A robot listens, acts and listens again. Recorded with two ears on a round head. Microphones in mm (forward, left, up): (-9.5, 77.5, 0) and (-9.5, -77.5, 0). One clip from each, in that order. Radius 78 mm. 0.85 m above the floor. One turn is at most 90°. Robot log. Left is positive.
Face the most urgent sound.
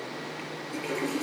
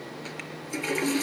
cmd idle
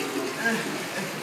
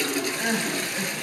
cmd yaw +30
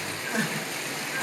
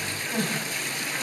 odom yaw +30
note: So it is at 140° left.
cmd yaw +90
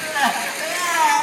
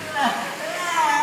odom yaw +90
note: The crying is now 45° left.
cmd yaw +45
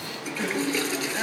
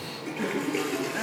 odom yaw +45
note: The crying is now 35° left.
cmd yaw +35
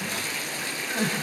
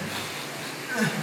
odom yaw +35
note: The crying is now 10° right.
cmd yaw -10
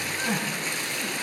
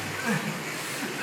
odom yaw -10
end: Facing the crying, over 4 m away.